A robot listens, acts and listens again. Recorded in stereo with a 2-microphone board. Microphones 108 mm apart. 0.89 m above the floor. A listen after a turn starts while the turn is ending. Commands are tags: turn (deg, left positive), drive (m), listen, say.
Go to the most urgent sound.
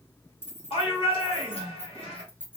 <turn deg="60"/>
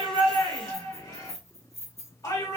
<turn deg="40"/>
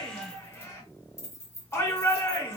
<turn deg="30"/>
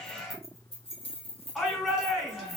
<drive m="1.0"/>
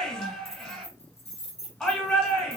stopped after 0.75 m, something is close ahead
<turn deg="10"/>
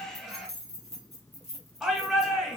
<say>I am next to the shout.</say>